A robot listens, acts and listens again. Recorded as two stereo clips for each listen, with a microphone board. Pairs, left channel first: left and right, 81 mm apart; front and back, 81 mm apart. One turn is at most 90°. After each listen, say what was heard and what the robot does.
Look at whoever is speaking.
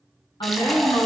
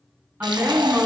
The woman speaking: 110° left. Turn 90° left.
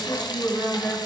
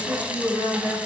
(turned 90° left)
The woman speaking is now 40° left. Turn 40° left.
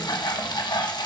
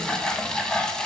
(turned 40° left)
Keep listening.
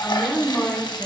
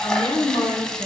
The woman speaking is now 10° left. Turn 10° left.
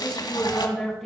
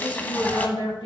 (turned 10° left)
Found it: a woman speaking, straight ahead, 2 to 4 m away.